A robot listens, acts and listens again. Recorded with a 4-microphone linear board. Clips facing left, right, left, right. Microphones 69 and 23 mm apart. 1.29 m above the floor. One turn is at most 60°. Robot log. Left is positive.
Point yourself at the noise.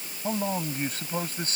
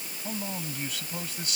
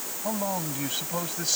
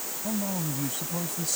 note: The man speaking: about 40° left or 140° left.
cmd yaw +40
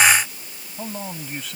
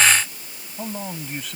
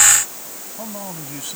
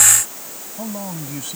end: Facing the man speaking.